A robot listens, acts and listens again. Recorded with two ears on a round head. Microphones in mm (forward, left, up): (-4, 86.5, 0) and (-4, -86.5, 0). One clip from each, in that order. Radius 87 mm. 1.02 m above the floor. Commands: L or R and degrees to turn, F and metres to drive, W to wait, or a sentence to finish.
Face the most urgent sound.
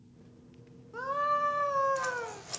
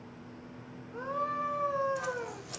L35
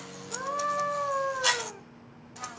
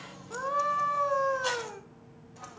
Facing the scream, 2 to 4 m away.